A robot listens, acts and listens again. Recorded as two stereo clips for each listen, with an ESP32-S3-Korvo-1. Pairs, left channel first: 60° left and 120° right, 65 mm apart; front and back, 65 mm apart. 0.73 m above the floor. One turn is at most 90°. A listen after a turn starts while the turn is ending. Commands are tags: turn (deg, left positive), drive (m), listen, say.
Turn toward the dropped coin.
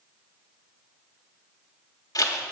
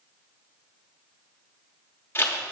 <listen/>
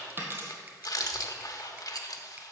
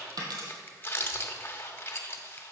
<turn deg="-90"/>
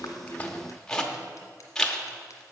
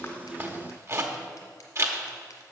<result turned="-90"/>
<turn deg="-85"/>
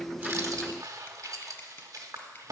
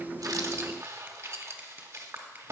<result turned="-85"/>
<say>Facing where the dropped coin came from. I can't hear it now.</say>